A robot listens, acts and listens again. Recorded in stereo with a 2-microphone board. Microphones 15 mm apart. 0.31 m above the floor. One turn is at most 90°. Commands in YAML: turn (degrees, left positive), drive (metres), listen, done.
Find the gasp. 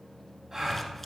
turn: -25
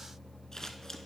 listen: true
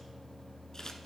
done: "I heard a gasp, but can't make it out now. It was about straight ahead or 130° right."